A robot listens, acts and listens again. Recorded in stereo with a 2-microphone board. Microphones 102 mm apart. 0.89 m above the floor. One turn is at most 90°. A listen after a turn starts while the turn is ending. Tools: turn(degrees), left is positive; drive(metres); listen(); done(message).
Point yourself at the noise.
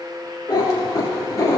turn(degrees=30)
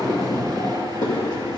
turn(degrees=40)
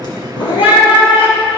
turn(degrees=90)
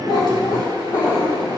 turn(degrees=35)
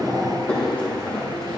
turn(degrees=15)
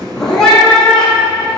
done("Found it: a cat meowing, straight ahead.")